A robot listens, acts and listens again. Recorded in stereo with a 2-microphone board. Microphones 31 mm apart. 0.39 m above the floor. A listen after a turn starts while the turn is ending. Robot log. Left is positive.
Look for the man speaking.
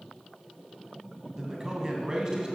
note: The man speaking: about 25° right or 155° right.
cmd yaw -25
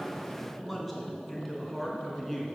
end: Facing the man speaking, 2 to 4 m away.